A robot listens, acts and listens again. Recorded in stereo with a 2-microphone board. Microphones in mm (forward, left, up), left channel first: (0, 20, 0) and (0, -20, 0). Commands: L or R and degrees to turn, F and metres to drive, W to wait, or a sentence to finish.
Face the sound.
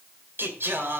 R60
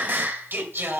R60
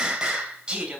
R20
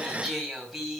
Found it: singing, straight ahead.